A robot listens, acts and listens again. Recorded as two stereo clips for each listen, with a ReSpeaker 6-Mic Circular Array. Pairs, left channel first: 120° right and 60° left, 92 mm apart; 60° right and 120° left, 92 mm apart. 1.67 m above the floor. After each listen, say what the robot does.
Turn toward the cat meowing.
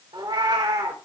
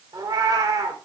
Turn 80° left.
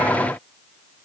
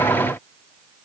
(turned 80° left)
Keep listening.
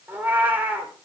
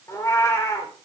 Facing the cat meowing.